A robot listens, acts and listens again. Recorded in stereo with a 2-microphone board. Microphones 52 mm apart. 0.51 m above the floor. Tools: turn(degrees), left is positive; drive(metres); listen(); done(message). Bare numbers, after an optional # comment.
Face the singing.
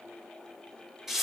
listen()
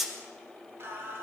# The singing: about 50° right or 130° right.
turn(-50)
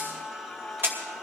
done("Found it: singing, straight ahead, 2 to 4 m away.")